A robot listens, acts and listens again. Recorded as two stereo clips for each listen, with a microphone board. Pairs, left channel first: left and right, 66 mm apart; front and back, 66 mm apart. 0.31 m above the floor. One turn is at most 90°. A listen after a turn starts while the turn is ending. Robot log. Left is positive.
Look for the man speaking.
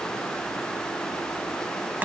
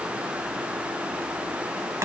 cmd idle
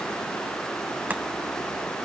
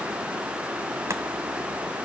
cmd idle
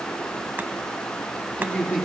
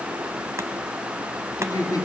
note: The man speaking: 15° left.
cmd yaw +15
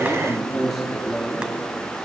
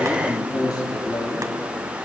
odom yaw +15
end: Facing the man speaking.